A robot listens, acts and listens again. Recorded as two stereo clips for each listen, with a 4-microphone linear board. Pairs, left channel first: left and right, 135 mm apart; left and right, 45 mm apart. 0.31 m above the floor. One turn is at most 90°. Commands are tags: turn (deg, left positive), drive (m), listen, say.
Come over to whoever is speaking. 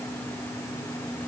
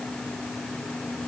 <listen/>
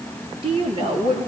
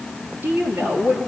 <turn deg="-40"/>
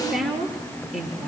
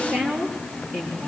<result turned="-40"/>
<drive m="1.0"/>
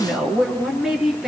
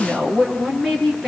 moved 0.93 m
<drive m="1.0"/>
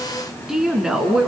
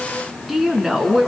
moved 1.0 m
<drive m="1.0"/>
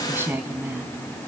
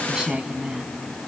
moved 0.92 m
<turn deg="-15"/>
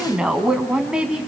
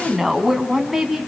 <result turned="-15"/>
<drive m="1.0"/>
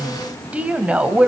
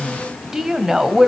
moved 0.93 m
<turn deg="-10"/>
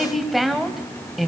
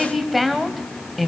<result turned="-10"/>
<drive m="1.0"/>
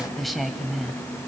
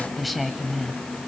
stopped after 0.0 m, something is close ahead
<say>Arrived at the woman speaking, straight ahead.</say>